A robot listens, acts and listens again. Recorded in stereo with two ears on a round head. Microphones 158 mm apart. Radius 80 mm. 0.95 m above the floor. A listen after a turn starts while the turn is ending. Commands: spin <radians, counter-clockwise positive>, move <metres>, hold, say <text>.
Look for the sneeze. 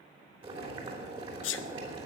spin 1.31
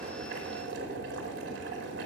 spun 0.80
hold
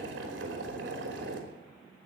say I heard a sneeze, but can't make it out now. It was about 30° left or 60° left.